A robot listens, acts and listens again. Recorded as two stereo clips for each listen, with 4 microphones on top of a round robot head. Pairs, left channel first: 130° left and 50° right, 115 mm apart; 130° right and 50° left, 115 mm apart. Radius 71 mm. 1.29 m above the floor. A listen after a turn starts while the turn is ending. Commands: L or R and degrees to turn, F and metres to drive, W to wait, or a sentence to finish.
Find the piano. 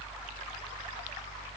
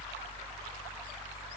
W
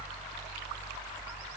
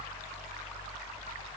W
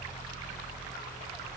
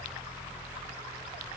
I can't make out a piano.